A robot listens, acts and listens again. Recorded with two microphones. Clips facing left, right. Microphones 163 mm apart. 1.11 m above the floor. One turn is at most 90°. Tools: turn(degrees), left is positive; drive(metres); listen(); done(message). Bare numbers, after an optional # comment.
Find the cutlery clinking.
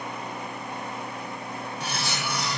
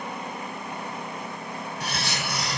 # The cutlery clinking: about 60° right or 120° right.
turn(-60)
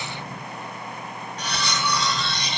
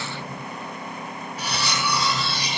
done("Found it: cutlery clinking, straight ahead.")